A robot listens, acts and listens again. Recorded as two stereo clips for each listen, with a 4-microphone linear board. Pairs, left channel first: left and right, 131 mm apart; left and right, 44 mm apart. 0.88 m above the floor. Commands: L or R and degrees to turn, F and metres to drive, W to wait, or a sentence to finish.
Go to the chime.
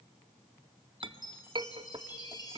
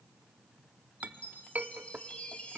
L35
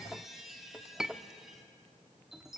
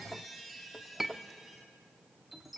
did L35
F1.0
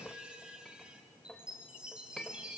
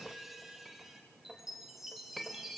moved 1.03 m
F1.0
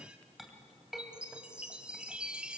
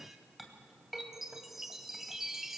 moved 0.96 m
R10
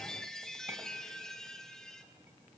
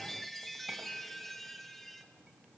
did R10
F1.0
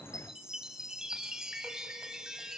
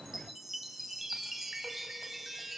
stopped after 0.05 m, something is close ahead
I am next to the chime.